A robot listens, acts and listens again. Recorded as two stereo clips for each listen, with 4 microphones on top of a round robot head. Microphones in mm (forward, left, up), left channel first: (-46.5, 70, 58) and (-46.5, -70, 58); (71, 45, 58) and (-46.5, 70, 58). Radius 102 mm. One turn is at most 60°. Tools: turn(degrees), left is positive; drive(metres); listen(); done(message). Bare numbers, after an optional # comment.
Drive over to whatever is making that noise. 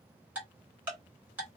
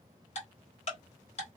# The ticking: 15° right.
turn(-15)
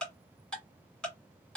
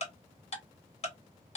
drive(1.0)
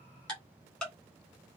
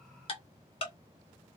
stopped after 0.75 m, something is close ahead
done("I am next to the ticking.")